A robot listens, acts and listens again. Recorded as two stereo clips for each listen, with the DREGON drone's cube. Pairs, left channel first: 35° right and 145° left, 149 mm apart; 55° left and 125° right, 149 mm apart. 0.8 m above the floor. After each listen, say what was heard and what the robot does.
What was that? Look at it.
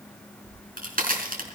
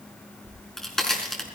The crack: 145° left. Turn 145° left.
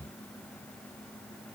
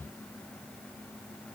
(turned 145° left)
Facing where the crack came from. I can't hear it now.